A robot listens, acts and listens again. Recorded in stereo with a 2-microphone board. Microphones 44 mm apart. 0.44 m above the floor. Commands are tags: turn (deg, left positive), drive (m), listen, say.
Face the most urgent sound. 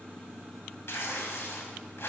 <listen/>
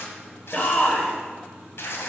<turn deg="30"/>
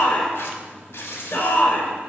<turn deg="115"/>
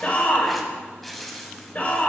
<turn deg="45"/>
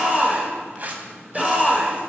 <say>Found it: a shout, straight ahead, 1 to 2 m away.</say>